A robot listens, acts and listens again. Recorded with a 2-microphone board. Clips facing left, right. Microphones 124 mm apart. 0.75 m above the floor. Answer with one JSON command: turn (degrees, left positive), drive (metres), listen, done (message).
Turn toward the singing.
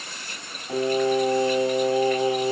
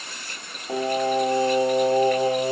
{"turn": -45}
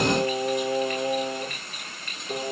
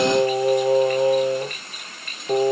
{"turn": -50}
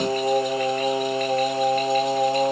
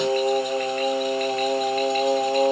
{"turn": 25}
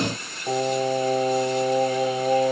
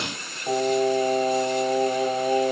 {"done": "Facing the singing."}